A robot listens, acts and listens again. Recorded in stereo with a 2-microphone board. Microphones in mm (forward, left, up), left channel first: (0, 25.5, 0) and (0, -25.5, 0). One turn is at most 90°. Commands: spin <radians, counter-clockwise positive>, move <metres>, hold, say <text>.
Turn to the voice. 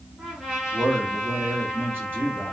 spin -0.70
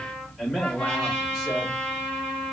say Found it: a man speaking, straight ahead.